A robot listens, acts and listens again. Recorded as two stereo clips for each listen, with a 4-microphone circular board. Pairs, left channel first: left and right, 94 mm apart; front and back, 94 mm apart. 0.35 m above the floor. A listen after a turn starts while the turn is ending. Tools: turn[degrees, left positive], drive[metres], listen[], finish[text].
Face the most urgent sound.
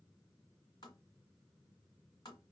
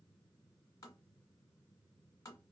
Action: listen[]
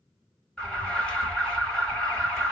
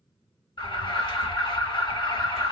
Thought: The alarm: 10° left.
Action: turn[10]
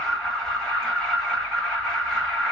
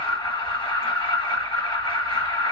Action: finish[Facing the alarm.]